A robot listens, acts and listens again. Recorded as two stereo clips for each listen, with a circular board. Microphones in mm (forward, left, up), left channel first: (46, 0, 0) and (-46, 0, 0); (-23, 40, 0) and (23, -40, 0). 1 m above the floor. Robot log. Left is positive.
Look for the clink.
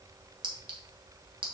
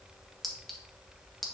note: The clink: 150° right.
cmd yaw -150
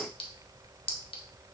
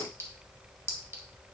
end: Found it: a clink, straight ahead.